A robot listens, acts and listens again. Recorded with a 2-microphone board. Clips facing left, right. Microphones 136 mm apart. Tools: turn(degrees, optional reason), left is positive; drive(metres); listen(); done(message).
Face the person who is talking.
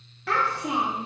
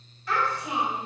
turn(degrees=65, reason="The child speaking: about 65° left or 115° left.")
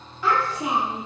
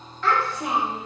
turn(degrees=10, reason="So it is at 10° left.")
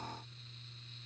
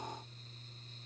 listen()
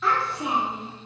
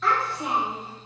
done("Facing the child speaking, 1 to 2 m away.")